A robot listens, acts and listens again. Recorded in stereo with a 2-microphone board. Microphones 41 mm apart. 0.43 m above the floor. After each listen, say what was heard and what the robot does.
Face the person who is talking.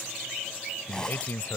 The man speaking: about 55° left or 125° left. Turn 55° left.
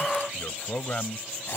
So it is at 30° left. Turn 30° left.
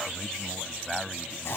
Found it: a man speaking, straight ahead.